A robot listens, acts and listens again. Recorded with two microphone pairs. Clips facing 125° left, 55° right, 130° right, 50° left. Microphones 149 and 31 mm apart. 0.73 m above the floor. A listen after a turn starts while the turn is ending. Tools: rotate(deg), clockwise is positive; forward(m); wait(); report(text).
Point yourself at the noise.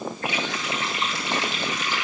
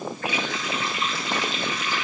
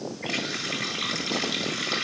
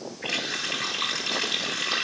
rotate(-60)
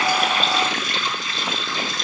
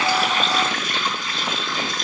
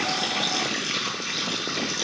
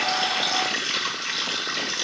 rotate(10)
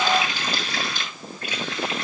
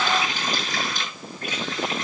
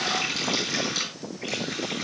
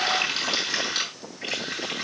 report("Facing the running tap, over 4 m away.")